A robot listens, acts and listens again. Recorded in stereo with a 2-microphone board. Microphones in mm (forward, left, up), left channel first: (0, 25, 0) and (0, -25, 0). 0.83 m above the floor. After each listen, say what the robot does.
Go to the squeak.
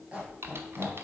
Turn 30° right.
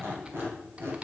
Turn 120° right.
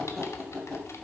Drive 1.0 m forward.
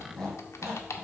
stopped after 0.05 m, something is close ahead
Something is in my way. I am facing the squeak but have not reached it.